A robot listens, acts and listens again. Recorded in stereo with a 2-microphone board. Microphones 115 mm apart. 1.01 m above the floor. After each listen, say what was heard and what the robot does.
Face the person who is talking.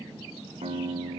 Keep listening.
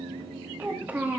The child speaking: about 15° right or 165° right. Turn 15° right.
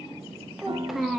Found it: a child speaking, straight ahead, 1 to 2 m away.